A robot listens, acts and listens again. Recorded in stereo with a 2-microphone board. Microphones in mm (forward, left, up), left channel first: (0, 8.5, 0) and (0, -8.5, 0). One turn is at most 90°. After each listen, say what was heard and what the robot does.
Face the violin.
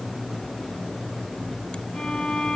The violin: about 60° left or 120° left. Turn 60° left.
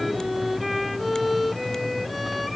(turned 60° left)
Found it: a violin, straight ahead.